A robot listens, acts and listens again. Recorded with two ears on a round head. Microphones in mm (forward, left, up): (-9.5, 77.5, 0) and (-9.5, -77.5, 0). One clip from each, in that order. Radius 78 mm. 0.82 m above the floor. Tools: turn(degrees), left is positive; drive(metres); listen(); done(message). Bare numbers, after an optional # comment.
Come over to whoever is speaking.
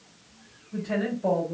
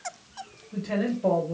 turn(-90)
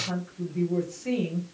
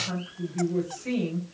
# So it is at 15° right.
turn(-15)
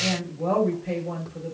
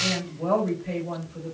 drive(1.0)
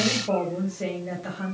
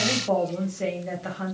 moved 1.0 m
# The woman speaking is now 15° right.
turn(-15)
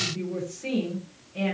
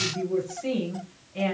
drive(1.0)
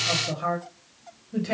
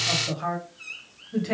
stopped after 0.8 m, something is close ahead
done("Arrived at the woman speaking, straight ahead.")